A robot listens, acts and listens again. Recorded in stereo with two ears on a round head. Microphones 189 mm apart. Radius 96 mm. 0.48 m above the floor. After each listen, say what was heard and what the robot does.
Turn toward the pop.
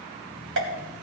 The pop: about 70° right or 110° right. Turn 70° right.
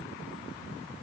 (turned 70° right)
Keep listening.
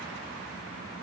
I heard a pop, but can't make it out now. It was about straight ahead or 40° right.